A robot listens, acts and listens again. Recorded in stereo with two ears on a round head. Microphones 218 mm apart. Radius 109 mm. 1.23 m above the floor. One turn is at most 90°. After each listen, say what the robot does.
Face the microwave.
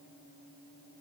Keep listening.
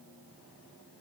Keep listening.
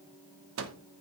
Turn 55° right.
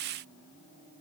Keep listening.
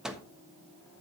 Facing the microwave.